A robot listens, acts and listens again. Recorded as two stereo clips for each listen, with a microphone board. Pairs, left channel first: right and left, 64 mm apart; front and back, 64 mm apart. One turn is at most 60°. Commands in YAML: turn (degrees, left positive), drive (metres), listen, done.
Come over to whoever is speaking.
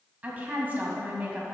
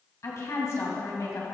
turn: 30
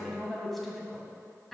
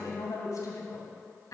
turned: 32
drive: 1.0
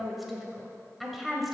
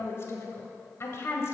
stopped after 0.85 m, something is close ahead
done: "I am next to the woman speaking."